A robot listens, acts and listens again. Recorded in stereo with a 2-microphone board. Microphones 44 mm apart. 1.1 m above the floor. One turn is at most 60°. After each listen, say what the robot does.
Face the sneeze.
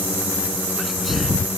Turn 30° right.
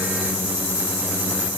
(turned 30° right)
Keep listening.
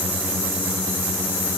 I heard a sneeze, but can't make it out now. It was about 25° left or 145° right.